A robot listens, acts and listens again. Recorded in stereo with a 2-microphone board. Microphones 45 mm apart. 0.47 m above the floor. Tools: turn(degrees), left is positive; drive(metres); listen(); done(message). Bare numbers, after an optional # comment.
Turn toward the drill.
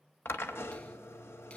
# The drill: about 70° left or 110° left.
turn(70)
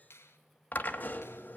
# So it is at 40° left.
turn(40)
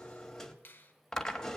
# The drill is now 10° left.
turn(10)
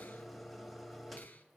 done("Facing the drill.")